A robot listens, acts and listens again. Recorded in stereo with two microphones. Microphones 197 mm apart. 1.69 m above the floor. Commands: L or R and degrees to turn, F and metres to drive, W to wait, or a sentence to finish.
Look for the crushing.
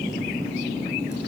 W
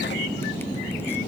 W
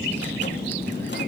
I can't make out crushing.